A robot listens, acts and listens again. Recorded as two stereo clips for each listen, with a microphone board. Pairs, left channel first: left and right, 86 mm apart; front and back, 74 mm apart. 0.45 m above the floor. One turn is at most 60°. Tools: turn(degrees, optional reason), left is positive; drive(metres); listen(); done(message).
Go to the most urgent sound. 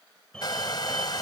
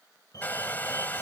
turn(degrees=10, reason="The fire alarm: 10° left.")
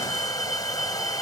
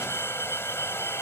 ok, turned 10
drive(metres=1.0)
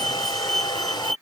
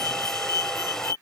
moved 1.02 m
drive(metres=1.0)
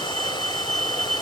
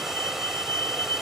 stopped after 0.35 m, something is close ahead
turn(degrees=10, reason="The fire alarm is now 10° left.")
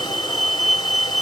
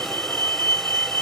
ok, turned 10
done("Arrived at the fire alarm, straight ahead.")